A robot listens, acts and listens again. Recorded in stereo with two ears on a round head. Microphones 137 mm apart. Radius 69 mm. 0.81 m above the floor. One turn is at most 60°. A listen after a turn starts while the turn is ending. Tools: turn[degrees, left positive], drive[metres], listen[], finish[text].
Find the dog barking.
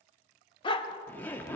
Thought: The dog barking: about 35° left or 145° left.
Action: turn[35]
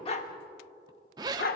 Thought: So it is at 105° left.
Action: turn[60]
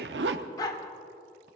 Thought: The dog barking is now 25° left.
Action: turn[25]
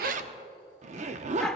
Action: finish[Found it: a dog barking, straight ahead.]